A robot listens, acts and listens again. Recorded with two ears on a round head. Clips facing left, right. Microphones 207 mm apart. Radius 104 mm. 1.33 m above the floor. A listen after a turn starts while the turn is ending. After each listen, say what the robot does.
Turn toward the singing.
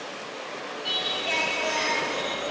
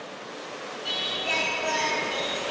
Turn 30° right.
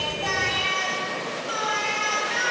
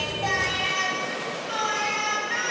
Found it: singing, straight ahead, 2 to 4 m away.